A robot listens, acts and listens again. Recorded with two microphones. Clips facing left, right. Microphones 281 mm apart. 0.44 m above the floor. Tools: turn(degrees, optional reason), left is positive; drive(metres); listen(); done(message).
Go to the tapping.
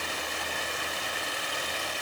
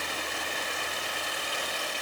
listen()
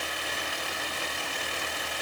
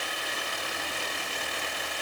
listen()
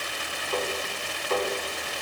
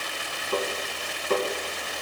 turn(degrees=-55, reason="The tapping: about 55° right or 125° right.")
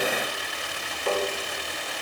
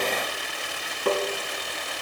turn(degrees=-70, reason="So it is at 70° right.")
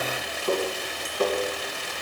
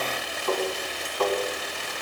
turn(degrees=20, reason="The tapping is now 20° left.")
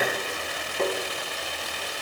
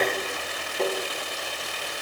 drive(metres=1.0)
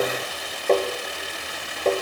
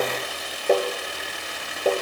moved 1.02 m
turn(degrees=-10, reason="The tapping is now 10° right.")
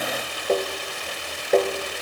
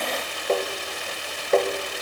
drive(metres=1.0)
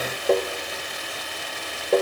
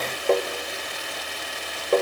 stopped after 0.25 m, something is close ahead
done("I am next to the tapping.")